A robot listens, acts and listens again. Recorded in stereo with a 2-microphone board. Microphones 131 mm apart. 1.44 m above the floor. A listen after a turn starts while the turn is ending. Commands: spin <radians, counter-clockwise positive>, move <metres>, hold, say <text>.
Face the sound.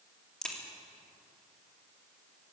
spin 0.52
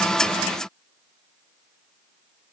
hold
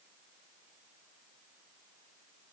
say I heard a crack, but can't make it out now. It was about 25° right or 145° left.